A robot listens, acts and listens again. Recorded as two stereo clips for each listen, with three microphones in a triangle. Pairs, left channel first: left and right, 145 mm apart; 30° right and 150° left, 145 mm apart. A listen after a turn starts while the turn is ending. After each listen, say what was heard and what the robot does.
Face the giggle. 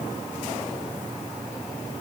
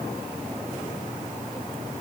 Keep listening.
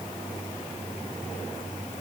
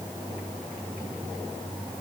Keep listening.
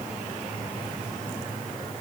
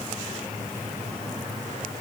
I can't make out a giggle to turn to.